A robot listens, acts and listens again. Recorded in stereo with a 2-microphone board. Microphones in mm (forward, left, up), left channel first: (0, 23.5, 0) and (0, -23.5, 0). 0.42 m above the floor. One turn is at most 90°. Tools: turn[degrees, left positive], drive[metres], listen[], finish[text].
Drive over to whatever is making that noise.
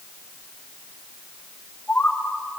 Action: turn[30]
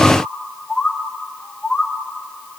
Thought: So it is at 15° right.
Action: turn[-15]
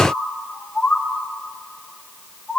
Action: drive[1.0]
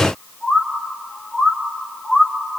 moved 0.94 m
Thought: The bird is now 10° right.
Action: turn[-10]
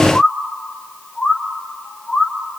Action: drive[1.0]
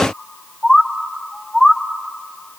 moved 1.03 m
Action: drive[1.0]
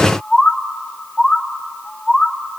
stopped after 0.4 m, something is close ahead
Action: finish[I am next to the bird.]